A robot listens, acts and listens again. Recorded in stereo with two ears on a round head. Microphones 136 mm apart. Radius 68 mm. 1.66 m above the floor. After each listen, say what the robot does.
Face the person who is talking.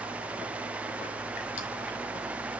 Keep listening.
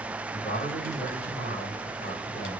Turn 35° left.
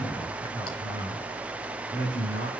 Facing the man speaking.